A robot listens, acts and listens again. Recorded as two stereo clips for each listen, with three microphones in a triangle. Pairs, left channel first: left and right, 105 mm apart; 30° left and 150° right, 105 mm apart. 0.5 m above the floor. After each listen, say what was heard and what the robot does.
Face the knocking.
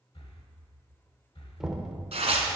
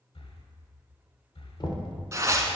Found it: knocking, straight ahead.